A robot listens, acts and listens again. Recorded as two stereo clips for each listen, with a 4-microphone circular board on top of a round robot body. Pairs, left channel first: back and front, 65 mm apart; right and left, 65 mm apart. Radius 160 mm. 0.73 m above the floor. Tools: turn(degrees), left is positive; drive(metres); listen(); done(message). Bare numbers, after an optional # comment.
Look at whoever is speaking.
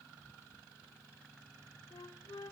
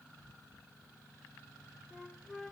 listen()
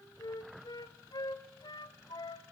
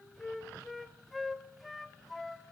listen()
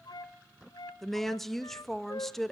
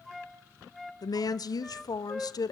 # The woman speaking: 95° right.
turn(-95)
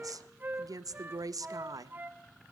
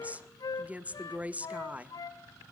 # The woman speaking is now 25° left.
turn(25)
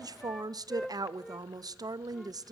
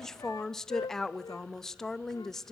done("Found it: a woman speaking, straight ahead, under 1 m away.")